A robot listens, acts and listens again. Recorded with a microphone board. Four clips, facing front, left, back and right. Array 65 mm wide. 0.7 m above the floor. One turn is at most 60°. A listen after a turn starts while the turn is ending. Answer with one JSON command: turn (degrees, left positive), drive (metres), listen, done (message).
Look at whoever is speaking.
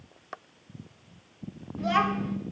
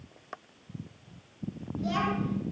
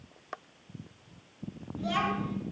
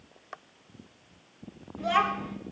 {"turn": -45}
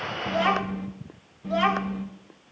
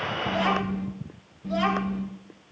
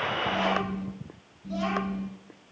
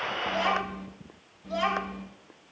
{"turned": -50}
{"done": "Facing the child speaking."}